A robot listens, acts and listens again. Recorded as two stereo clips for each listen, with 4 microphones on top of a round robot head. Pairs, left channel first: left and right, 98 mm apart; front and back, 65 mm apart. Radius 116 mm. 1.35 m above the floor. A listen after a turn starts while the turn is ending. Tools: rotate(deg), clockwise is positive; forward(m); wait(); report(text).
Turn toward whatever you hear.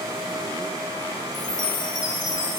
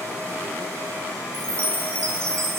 rotate(-135)
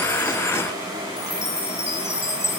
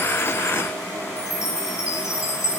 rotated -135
rotate(-35)
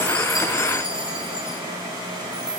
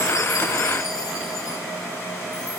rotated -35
wait()
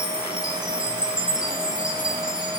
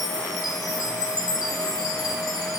rotate(10)
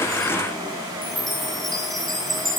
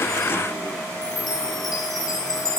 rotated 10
report("Facing the chime.")